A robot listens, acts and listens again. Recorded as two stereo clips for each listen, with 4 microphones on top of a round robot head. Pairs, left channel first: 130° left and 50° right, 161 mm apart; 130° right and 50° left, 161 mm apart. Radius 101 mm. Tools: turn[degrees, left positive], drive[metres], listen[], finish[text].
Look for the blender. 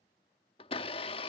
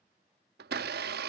Thought: The blender: 70° left.
Action: turn[70]
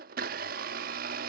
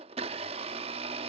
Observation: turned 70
Thought: The blender is now 10° right.
Action: turn[-10]
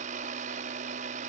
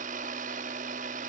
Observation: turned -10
Action: finish[Facing the blender.]